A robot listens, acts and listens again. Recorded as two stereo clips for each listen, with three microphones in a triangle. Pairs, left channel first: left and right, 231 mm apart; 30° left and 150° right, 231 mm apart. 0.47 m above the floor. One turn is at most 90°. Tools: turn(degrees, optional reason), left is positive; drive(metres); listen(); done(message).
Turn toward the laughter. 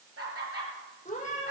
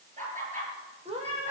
turn(degrees=-90, reason="The laughter: 95° right.")
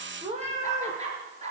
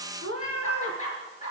turn(degrees=-30, reason="The laughter is now 30° right.")
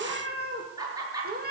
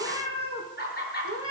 turn(degrees=-15, reason="The laughter is now 15° right.")
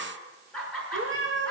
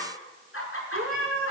done("Found it: laughter, straight ahead, over 4 m away.")